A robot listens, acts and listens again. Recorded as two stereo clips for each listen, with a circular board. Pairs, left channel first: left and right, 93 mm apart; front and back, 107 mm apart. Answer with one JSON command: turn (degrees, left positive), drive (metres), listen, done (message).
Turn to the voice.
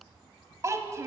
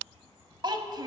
{"turn": -140}
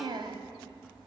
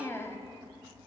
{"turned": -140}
{"turn": -65}
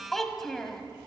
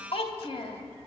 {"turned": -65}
{"done": "Facing the child speaking."}